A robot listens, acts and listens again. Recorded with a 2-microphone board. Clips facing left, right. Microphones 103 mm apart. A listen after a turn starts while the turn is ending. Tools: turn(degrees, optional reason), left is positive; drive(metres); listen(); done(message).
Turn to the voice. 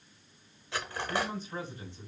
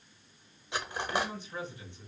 turn(degrees=35, reason="The man speaking: about 35° left or 145° left.")
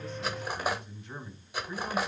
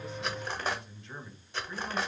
turn(degrees=15, reason="So it is at 15° left.")
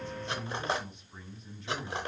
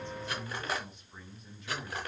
done("Found it: a man speaking, straight ahead, 1 to 2 m away.")